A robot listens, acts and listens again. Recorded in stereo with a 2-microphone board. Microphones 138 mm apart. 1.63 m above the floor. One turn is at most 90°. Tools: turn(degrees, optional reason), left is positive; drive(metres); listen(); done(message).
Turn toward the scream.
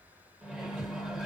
listen()
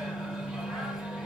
listen()
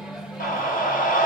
turn(degrees=90)
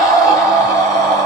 done("Facing the scream, 1 to 2 m away.")